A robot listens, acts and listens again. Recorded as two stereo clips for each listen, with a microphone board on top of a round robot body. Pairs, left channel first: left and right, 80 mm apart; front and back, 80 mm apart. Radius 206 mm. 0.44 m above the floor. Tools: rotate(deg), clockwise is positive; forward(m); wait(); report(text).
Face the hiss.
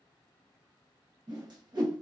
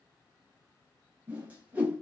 wait()
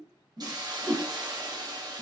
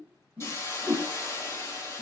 rotate(55)
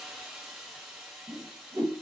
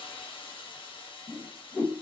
report("Found it: a hiss, straight ahead.")